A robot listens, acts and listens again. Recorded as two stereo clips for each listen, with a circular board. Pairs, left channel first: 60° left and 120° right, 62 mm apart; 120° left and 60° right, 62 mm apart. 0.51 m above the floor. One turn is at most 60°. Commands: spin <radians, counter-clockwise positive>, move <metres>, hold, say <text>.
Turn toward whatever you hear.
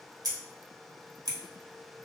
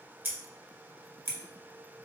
spin -1.05
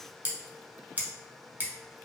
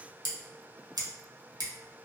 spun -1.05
spin -0.96
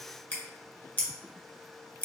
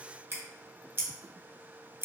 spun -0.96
say Found it: scissors, straight ahead, under 1 m away.